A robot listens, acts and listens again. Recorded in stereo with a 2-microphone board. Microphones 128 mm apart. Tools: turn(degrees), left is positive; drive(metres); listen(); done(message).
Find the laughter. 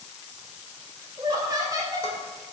turn(degrees=-25)
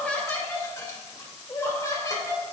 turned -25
turn(degrees=30)
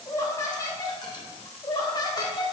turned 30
turn(degrees=35)
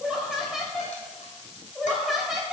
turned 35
done("Facing the laughter.")